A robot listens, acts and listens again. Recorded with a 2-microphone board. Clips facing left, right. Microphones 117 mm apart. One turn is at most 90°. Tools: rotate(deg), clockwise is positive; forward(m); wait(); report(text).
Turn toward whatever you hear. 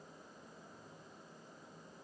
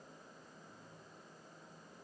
wait()
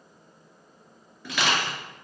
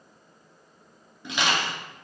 rotate(20)
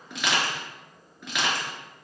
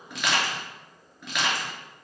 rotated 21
report("Facing the crushing, 1 to 2 m away.")